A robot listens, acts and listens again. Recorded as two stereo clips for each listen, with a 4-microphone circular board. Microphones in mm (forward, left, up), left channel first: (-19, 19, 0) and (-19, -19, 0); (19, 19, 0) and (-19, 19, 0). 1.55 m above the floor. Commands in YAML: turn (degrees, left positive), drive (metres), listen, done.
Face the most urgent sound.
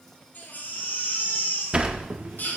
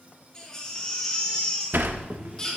turn: 70
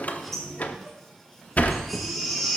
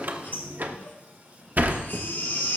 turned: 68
done: "Facing the baby crying."